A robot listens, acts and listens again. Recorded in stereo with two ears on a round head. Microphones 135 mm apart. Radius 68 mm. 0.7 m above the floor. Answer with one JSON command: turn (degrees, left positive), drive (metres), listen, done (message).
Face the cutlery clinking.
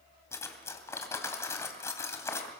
{"turn": 20}
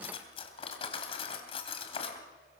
{"turn": 140}
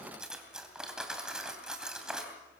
{"done": "Facing the cutlery clinking, 2 to 4 m away."}